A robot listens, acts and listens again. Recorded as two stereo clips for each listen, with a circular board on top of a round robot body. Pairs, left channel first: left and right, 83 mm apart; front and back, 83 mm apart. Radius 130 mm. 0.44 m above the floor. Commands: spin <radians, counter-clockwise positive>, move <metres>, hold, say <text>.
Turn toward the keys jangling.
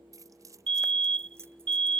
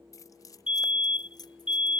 spin -0.61
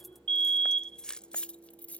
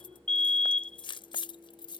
spin 0.26
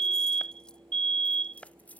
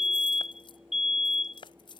spin 0.35
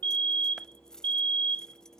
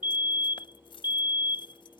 say Found it: keys jangling, straight ahead.